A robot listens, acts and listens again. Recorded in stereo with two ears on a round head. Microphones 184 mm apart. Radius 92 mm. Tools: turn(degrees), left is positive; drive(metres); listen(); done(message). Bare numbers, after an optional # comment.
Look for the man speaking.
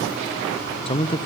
# The man speaking: about 25° left or 155° left.
turn(25)
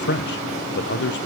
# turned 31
# So it is at 125° left.
turn(125)
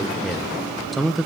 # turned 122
done("Facing the man speaking.")